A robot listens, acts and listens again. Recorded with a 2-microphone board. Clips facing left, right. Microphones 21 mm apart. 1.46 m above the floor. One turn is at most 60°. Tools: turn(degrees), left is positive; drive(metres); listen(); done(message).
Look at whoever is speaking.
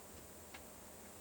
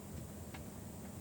listen()
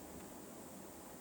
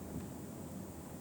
listen()
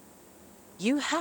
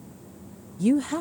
turn(degrees=35)
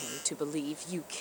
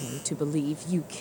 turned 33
done("Found it: a woman speaking, straight ahead.")